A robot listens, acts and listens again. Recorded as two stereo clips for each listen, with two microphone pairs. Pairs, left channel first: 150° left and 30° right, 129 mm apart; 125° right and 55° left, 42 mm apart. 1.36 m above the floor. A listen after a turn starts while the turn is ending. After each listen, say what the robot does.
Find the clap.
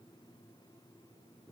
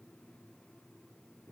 Keep listening.
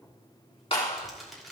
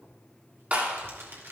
Turn 105° left.
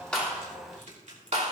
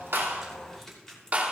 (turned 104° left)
Facing the clap, 2 to 4 m away.